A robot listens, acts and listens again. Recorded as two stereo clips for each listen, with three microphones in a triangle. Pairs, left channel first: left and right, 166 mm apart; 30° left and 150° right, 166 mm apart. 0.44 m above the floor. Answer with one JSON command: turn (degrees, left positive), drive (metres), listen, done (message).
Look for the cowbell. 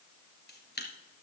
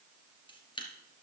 {"listen": true}
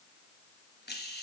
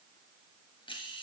{"listen": true}
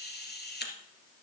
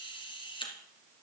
{"done": "I can't make out a cowbell, only a camera shutter."}